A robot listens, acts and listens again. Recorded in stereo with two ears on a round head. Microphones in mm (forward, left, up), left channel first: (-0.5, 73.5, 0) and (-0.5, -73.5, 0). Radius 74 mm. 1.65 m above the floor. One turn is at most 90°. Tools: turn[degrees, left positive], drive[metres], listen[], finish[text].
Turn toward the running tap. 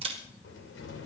Action: listen[]
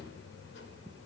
Action: listen[]
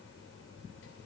Action: finish[I can't make out a running tap to turn to.]